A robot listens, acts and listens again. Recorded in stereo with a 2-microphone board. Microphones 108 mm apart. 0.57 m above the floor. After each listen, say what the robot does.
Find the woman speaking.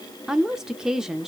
Turn 30° right.
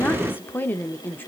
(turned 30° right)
Turn 25° left.
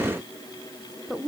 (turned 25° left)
Facing the woman speaking, 1 to 2 m away.